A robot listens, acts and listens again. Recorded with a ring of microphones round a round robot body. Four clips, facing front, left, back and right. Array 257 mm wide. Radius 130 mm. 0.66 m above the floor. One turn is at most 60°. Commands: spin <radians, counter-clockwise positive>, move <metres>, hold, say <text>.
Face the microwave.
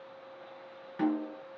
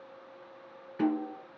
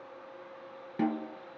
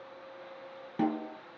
hold
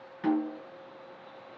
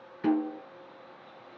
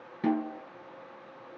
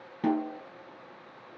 hold
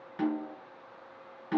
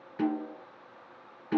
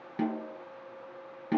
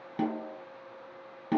say I can't make out a microwave to turn to.